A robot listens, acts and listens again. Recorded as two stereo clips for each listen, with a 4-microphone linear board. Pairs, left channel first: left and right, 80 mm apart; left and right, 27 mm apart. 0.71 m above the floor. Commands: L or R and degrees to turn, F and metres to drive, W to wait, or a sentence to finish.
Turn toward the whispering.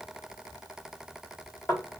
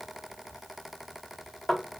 W
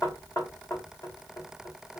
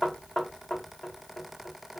W
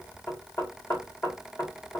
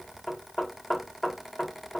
I can't make out whispering, only knocking.